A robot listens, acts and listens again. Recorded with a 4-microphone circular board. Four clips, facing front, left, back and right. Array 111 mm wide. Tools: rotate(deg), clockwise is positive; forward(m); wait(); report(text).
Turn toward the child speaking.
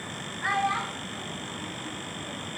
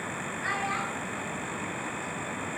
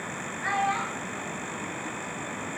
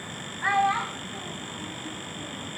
rotate(90)
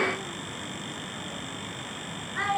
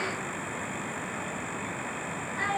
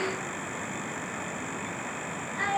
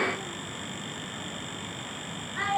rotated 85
rotate(20)
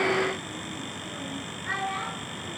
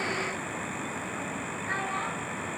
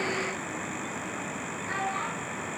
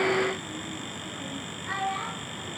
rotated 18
wait()
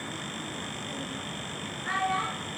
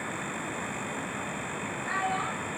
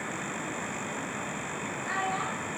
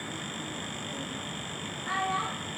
report("Facing the child speaking.")